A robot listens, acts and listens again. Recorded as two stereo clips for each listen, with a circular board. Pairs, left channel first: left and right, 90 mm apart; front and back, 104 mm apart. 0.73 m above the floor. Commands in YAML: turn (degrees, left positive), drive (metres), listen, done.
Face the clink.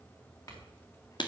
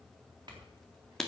turn: 135
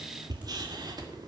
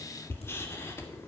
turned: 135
listen: true
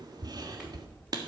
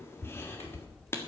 listen: true
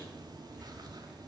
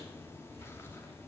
done: "Facing where the clink came from. I can't hear it now."